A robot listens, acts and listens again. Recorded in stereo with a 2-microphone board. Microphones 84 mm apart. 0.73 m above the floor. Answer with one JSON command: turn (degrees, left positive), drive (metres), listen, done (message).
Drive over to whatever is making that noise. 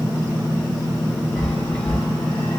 {"turn": 30}
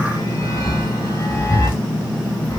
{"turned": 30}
{"turn": 135}
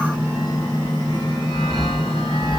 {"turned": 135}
{"turn": 85}
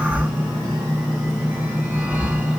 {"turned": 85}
{"turn": -20}
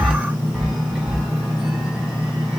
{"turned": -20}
{"drive": 1.0}
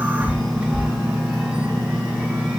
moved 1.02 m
{"turn": -10}
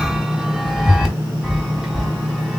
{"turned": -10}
{"drive": 1.0}
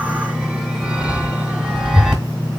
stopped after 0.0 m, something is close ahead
{"turn": -10}
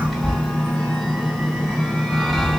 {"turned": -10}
{"done": "Arrived at the chime, straight ahead."}